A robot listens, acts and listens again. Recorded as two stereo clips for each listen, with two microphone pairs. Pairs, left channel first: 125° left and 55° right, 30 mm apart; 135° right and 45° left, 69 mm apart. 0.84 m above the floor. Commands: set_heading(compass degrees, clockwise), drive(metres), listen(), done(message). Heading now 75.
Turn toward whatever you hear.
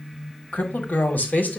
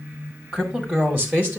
set_heading(330)
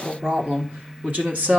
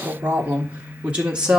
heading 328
set_heading(358)
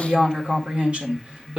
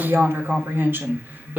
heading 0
set_heading(15)
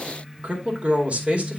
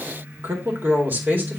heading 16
set_heading(31)
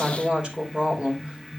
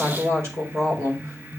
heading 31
done("Found it: a woman speaking, straight ahead.")